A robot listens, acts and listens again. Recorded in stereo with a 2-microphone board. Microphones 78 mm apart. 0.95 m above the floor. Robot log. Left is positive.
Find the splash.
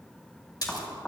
note: The splash: about 50° left or 130° left.
cmd yaw +50
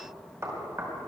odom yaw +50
cmd idle
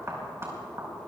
end: I heard a splash, but can't make it out now. It was about straight ahead or 80° left.